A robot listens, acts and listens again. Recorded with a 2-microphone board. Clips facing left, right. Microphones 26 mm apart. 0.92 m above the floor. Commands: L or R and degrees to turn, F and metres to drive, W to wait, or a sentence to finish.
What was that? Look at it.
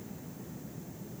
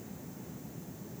W
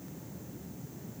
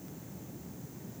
W
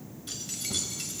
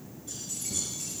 L70
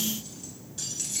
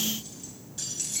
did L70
Found it: keys jangling, straight ahead, over 4 m away.